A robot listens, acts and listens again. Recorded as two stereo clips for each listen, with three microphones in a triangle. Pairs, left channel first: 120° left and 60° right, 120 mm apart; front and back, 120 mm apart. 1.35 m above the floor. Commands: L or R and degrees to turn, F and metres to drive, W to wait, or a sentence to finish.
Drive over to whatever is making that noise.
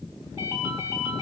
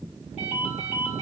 F1.0
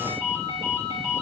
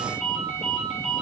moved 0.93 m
F1.0
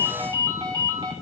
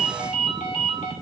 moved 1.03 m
F1.0
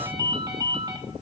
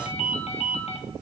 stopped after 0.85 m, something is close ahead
R10
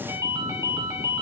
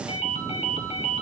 I am next to the ringtone.